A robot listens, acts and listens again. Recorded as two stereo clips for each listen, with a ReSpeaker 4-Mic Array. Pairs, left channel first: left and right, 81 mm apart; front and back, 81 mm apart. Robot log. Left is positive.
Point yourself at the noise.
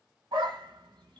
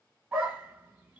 note: The dog barking: 110° right.
cmd yaw -110
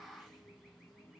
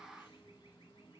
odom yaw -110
cmd idle
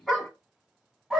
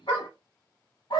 end: Facing the dog barking.